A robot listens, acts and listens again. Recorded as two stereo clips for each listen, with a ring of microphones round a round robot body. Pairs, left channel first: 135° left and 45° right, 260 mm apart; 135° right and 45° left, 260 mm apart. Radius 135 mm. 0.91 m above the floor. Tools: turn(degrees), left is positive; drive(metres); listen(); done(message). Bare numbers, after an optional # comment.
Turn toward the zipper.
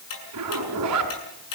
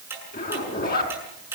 # The zipper: 75° right.
turn(-75)
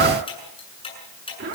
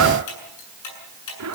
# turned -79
done("Facing the zipper, over 4 m away.")